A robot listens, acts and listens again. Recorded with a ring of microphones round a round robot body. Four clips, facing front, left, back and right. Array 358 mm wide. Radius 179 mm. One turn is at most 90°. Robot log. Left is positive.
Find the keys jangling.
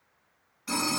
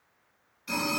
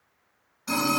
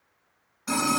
cmd idle
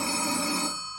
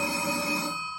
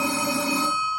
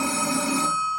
cmd idle
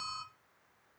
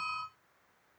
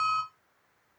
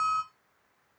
end: I can't make out keys jangling to turn to.